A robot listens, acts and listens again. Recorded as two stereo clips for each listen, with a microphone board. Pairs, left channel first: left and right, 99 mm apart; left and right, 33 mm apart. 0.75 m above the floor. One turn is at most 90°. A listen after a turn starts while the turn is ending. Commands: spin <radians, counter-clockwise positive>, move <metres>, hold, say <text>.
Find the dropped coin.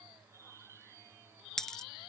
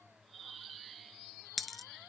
spin 0.52
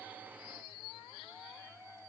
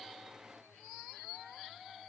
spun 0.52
hold
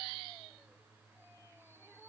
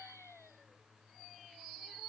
say I heard a dropped coin, but can't make it out now. It was about 25° right or 145° left.